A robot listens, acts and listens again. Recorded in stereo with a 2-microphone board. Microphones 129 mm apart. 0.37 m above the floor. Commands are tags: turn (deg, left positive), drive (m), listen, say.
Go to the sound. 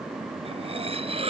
<turn deg="-50"/>
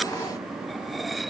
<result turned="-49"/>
<drive m="1.0"/>
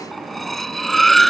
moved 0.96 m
<drive m="1.0"/>
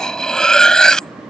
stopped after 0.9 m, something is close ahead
<say>I am next to the cutlery clinking.</say>